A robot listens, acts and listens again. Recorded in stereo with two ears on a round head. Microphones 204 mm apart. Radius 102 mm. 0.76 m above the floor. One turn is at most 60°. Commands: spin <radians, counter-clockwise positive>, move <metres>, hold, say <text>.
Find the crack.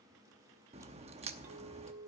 spin -0.52
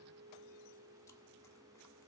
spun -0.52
hold
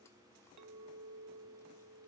say I heard a crack, but can't make it out now. It was about straight ahead or 120° right.